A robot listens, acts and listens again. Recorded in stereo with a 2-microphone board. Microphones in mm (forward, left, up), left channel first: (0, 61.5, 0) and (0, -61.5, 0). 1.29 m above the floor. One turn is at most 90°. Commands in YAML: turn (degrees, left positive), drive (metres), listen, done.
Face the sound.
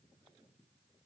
listen: true
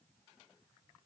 listen: true
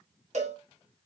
turn: -70
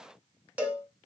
turn: -15
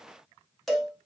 done: "Found it: a cowbell, straight ahead."